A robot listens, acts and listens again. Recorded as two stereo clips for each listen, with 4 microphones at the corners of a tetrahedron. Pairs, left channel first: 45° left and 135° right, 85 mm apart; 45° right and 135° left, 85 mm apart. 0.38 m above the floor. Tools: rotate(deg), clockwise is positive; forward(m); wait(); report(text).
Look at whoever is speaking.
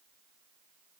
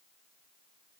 wait()
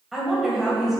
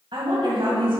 rotate(-140)
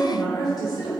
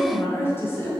rotate(-15)
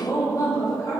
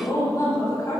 report("Facing the woman speaking, 2 to 4 m away.")